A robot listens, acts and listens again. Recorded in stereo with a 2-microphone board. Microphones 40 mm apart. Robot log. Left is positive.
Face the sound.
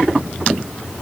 cmd idle
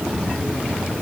cmd idle
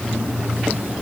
end: I can't make out anything to turn to.